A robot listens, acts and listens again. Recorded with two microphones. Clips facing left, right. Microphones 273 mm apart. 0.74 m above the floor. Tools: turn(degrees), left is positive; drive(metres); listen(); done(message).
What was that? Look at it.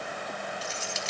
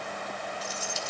turn(degrees=90)
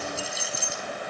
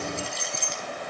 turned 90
done("Facing the keys jangling, 2 to 4 m away.")